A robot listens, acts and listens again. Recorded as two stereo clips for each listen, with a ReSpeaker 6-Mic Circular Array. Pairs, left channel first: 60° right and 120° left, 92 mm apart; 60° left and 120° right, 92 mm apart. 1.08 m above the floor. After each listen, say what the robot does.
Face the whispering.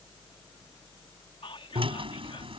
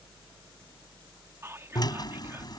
Turn 60° right.
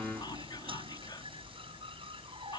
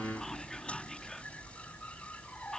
Keep listening.
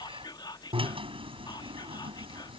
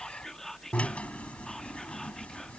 Turn 25° right.
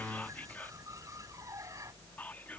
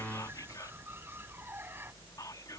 Turn 10° left.
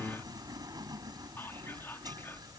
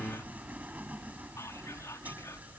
Keep listening.
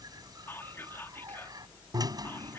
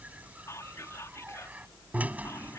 Found it: whispering, straight ahead.